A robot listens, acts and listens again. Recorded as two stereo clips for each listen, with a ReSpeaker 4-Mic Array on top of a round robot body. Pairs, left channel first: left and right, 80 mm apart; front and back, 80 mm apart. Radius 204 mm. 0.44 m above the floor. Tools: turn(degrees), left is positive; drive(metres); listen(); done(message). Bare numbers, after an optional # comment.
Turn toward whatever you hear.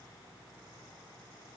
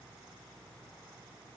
listen()
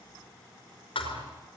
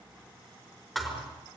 # The thud: 90° left.
turn(90)
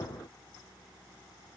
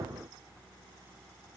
done("I heard a thud from this way, but can't make it out now.")